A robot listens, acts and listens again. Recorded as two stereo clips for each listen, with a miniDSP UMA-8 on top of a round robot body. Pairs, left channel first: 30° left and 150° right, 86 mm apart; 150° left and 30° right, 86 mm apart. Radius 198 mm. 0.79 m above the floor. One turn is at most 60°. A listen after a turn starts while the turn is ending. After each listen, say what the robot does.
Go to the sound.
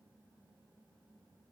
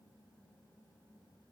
Keep listening.
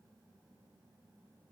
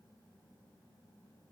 Keep listening.
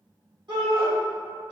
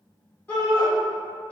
Turn 60° right.
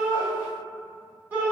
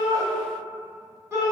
Turn 60° right.
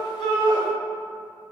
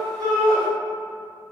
Turn 20° right.
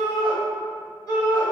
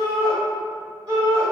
Drive 1.0 m forward.
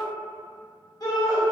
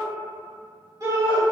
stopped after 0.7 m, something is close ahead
Arrived at the shout, straight ahead.